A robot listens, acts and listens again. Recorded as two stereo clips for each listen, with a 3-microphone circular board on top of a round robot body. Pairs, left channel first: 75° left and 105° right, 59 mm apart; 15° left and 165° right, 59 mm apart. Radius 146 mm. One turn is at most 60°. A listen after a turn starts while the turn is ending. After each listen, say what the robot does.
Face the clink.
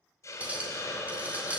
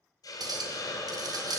Turn 60° right.
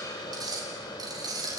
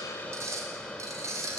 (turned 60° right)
Turn 60° right.
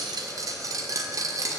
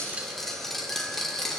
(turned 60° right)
Turn 60° right.
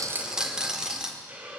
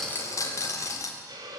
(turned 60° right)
Turn 25° right.
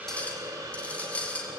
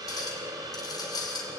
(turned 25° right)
Facing the clink, 1 to 2 m away.